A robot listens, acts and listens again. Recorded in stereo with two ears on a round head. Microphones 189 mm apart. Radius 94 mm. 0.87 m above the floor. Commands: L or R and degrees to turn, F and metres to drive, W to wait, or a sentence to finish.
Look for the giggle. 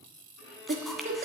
R40
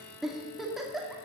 Found it: a giggle, straight ahead.